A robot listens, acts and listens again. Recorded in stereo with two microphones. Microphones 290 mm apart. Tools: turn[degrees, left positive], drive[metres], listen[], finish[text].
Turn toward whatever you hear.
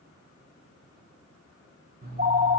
Thought: The phone ringing: about 35° right or 145° right.
Action: turn[-35]
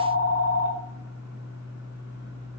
Thought: So it is at 110° right.
Action: turn[-110]
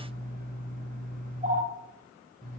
Thought: The phone ringing is now 30° right.
Action: turn[-30]
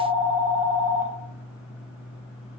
Action: finish[Found it: a phone ringing, straight ahead.]